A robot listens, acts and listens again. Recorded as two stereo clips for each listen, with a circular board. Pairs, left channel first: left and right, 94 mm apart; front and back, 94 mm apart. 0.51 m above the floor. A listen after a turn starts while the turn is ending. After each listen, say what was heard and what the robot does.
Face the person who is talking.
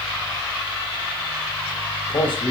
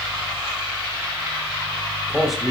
The man speaking: 90° left. Turn 90° left.
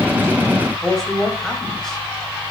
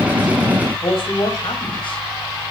Found it: a man speaking, straight ahead, 2 to 4 m away.